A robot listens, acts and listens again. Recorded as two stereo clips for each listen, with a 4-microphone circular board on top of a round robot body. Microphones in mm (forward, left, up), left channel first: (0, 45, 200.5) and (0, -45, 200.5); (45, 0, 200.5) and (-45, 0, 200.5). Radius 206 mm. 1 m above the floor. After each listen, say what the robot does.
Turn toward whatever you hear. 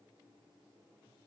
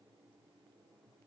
Keep listening.
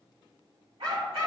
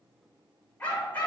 Turn 70° right.
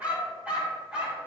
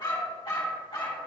Turn 10° right.
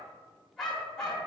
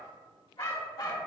Facing the dog barking.